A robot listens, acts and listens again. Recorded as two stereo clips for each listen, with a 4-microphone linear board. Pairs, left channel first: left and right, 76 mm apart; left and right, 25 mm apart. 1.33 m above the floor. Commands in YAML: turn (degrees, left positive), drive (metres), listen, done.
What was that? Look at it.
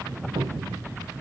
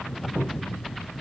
turn: -70
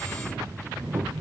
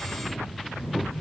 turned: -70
turn: -40
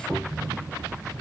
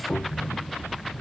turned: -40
done: "Found it: a cupboard door, straight ahead, 2 to 4 m away."